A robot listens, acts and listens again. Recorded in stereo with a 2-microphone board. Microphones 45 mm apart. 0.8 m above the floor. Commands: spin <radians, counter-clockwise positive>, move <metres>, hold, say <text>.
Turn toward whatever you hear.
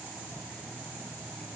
hold
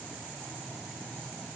hold
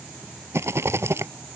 spin -1.57
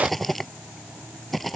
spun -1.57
say Facing the rattle.